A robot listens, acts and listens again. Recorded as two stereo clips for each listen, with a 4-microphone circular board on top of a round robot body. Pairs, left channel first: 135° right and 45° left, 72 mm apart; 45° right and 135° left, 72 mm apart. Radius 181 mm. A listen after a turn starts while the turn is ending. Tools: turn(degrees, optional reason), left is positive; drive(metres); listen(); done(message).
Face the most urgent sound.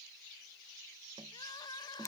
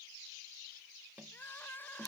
turn(degrees=-110, reason="The crying: 110° right.")
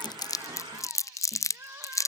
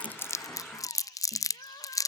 turn(degrees=-15, reason="The crying is now 15° right.")
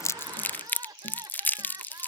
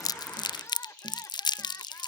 turn(degrees=10, reason="The crying is now 10° left.")
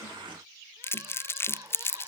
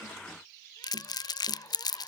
listen()
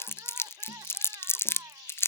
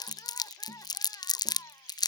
done("Found it: crying, straight ahead.")